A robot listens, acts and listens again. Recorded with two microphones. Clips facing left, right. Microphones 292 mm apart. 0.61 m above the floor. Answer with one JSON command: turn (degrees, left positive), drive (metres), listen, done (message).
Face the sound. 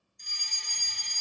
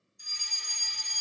{"turn": -30}
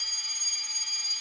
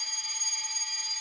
{"turn": 20}
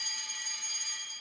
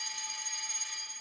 {"done": "Found it: a fire alarm, straight ahead, 2 to 4 m away."}